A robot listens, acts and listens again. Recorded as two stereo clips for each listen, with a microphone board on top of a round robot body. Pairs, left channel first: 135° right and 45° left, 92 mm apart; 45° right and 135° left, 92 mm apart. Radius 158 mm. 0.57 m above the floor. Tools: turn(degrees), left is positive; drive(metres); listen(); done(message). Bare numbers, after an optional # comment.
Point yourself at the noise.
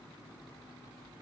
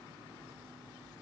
listen()
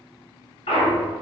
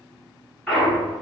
# The clunk: 135° right.
turn(-135)
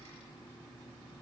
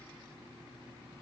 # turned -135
done("Facing where the clunk came from. I can't hear it now.")